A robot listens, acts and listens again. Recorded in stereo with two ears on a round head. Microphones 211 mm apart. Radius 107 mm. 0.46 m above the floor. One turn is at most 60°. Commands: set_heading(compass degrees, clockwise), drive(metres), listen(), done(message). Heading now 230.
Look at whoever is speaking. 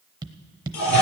listen()
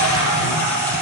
listen()
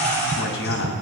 set_heading(175)
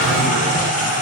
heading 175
listen()
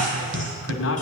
set_heading(115)
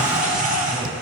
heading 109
listen()
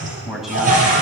done("Found it: a man speaking, straight ahead.")